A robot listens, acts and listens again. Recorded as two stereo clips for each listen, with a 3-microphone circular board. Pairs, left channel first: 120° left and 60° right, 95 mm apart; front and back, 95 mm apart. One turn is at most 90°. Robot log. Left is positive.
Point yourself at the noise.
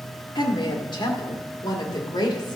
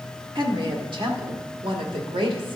note: The woman speaking: 160° left.
cmd yaw +90
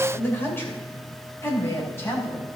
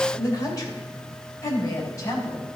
note: The woman speaking is now 55° left.
cmd yaw +55
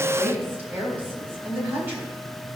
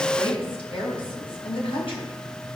note: The woman speaking is now 10° left.
cmd yaw +10
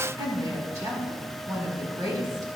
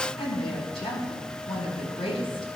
end: Found it: a woman speaking, straight ahead, over 4 m away.